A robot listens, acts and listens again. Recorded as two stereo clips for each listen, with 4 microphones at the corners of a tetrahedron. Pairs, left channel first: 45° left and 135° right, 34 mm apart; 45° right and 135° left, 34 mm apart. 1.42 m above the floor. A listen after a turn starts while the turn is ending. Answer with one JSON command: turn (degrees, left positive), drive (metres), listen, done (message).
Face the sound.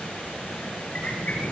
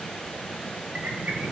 {"turn": 95}
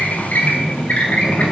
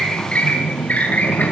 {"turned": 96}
{"done": "Found it: a squeak, straight ahead."}